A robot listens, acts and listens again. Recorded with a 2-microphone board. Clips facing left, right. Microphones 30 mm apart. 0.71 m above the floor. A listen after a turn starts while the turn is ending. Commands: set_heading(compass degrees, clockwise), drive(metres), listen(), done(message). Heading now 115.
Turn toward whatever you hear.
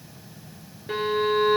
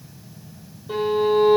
set_heading(55)
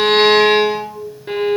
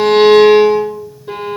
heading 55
set_heading(0)
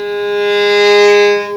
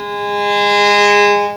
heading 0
set_heading(350)
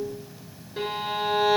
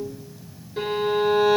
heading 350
done("Found it: a violin, straight ahead, 1 to 2 m away.")